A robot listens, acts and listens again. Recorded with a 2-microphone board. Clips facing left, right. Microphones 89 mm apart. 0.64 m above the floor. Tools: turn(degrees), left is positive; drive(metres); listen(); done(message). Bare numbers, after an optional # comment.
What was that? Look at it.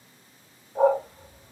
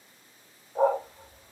turn(30)
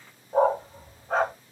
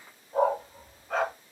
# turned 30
# So it is at 145° left.
turn(145)
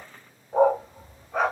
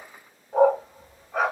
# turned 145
done("Found it: a dog barking, straight ahead.")